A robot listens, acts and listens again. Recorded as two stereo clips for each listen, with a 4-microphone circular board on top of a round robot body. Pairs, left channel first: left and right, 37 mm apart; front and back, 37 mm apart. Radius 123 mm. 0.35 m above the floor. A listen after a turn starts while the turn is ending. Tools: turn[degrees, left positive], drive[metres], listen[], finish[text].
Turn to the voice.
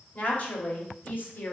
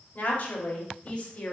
Thought: The woman speaking: 60° left.
Action: turn[60]
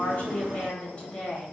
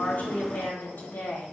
Thought: The woman speaking is now 30° left.
Action: turn[30]
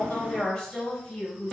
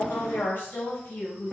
Thought: The woman speaking is now 25° left.
Action: turn[25]
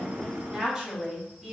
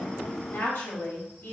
Thought: The woman speaking is now 15° right.
Action: turn[-15]
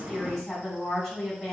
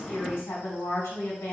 Action: finish[Found it: a woman speaking, straight ahead.]